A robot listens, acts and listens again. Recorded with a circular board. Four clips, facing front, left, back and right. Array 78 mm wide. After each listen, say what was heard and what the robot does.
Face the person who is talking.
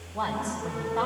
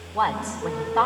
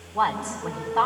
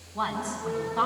The woman speaking: 105° left. Turn 105° left.
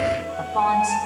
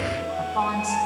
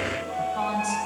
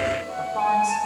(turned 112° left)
The woman speaking is now 10° right. Turn 10° right.
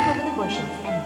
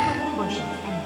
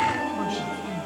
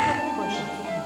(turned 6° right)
Facing the woman speaking.